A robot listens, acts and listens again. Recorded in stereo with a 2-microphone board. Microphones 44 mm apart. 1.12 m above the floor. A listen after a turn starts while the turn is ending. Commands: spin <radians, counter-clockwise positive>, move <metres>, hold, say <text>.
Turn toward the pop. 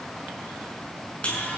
hold
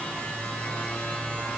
hold
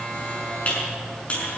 say I can't make out a pop to turn to.